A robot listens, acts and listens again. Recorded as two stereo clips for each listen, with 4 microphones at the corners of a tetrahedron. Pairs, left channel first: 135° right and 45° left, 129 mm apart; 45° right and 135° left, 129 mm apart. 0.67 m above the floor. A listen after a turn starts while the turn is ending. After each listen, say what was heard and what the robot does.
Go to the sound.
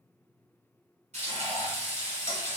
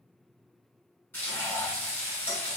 The frying: 30° left. Turn 30° left.
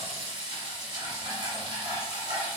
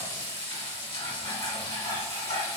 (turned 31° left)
Drive 1.0 m forward.
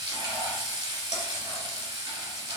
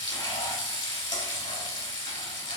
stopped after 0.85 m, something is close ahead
I am next to the frying.